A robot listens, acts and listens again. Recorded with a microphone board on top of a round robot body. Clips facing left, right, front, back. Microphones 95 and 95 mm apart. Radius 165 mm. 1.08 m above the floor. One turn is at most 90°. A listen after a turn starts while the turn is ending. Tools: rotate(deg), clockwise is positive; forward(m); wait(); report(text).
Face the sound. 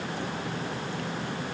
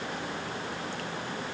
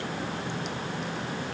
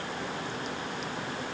wait()
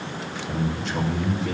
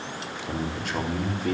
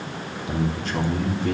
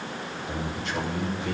rotate(50)
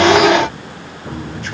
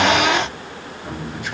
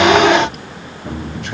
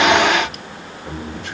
rotate(10)
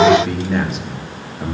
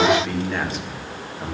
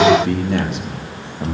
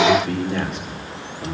rotate(-10)
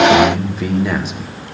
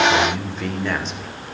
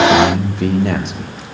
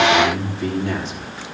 rotate(-10)
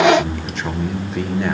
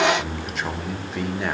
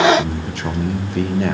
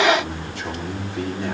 report("Found it: a man speaking, straight ahead, 2 to 4 m away.")